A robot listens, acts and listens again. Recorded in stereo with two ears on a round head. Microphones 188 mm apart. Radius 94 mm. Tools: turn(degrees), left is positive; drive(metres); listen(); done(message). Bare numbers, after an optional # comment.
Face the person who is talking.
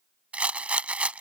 listen()
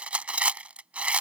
listen()
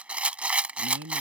# The man speaking: about 60° right or 120° right.
turn(-60)
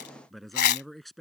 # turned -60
done("Facing the man speaking.")